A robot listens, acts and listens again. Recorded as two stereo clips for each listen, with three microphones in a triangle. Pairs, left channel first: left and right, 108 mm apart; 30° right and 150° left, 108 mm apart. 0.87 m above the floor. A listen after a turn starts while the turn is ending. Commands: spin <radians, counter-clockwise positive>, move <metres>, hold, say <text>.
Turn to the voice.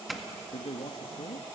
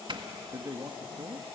spin 1.66
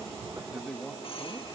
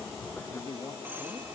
say Found it: a man speaking, straight ahead.